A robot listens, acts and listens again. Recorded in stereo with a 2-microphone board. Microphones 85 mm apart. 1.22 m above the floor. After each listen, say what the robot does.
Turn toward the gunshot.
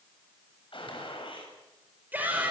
Turn 75° left.
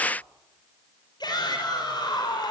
Keep listening.
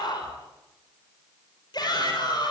I heard a gunshot, but can't make it out now. It was about straight ahead or 30° left.